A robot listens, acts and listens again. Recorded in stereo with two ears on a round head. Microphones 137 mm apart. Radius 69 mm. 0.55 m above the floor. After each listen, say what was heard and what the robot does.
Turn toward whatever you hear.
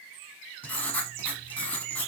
Turn 30° left.
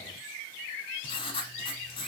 So it is at 145° left. Turn 145° left.
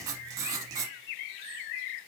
The writing is now 25° right. Turn 25° right.
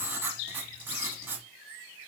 The writing is now 15° right. Turn 15° right.
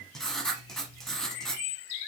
Found it: writing, straight ahead, under 1 m away.